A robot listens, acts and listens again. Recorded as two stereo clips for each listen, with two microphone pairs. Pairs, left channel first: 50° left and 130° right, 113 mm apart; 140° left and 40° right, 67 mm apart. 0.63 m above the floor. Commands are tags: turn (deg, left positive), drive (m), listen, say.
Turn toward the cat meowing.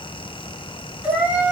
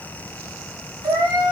<turn deg="-50"/>
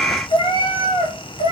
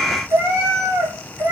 <turn deg="15"/>
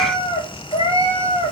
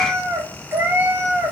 <turn deg="20"/>
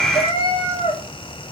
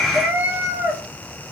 <turn deg="20"/>
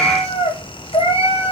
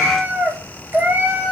<turn deg="20"/>
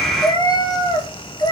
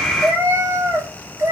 <say>Found it: a cat meowing, straight ahead.</say>